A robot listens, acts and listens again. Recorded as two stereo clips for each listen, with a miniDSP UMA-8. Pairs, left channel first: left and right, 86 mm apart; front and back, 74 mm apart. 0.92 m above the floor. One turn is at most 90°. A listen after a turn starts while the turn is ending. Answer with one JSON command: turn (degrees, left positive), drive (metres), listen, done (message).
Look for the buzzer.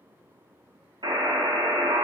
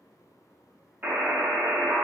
{"turn": -90}
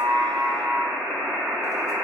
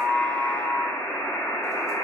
{"turn": -20}
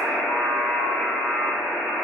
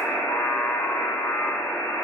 {"done": "Facing the buzzer, under 1 m away."}